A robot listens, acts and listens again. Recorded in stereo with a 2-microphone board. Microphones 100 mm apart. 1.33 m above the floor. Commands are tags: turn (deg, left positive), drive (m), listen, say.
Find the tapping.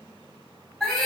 <listen/>
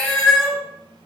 <listen/>
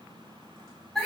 <say>I can't make out tapping to turn to.</say>